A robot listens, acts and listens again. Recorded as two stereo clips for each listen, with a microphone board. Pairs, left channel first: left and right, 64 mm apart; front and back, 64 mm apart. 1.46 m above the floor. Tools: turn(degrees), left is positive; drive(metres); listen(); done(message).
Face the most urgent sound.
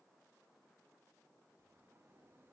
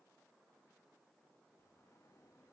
listen()
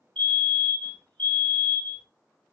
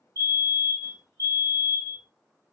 turn(degrees=165)
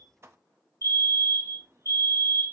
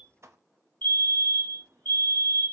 turn(degrees=65)
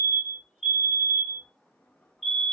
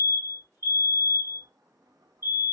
done("Facing the fire alarm.")